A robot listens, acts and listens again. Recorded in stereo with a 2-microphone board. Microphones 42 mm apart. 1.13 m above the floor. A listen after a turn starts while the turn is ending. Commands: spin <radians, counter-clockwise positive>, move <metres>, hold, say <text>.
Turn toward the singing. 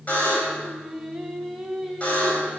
spin 0.52
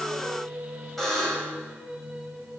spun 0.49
spin -0.35
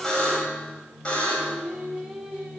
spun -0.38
say Found it: singing, straight ahead.